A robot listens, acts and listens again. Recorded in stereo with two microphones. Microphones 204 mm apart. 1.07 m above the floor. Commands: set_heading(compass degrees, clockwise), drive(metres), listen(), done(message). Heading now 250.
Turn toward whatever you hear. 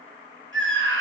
set_heading(315)
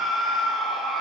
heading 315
done("Facing the scream.")